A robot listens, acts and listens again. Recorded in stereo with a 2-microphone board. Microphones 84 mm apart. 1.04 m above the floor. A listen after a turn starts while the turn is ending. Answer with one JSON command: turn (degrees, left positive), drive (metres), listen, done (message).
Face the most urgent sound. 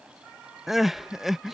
{"turn": -30}
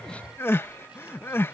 {"turn": 30}
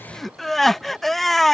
{"done": "Found it: crying, straight ahead."}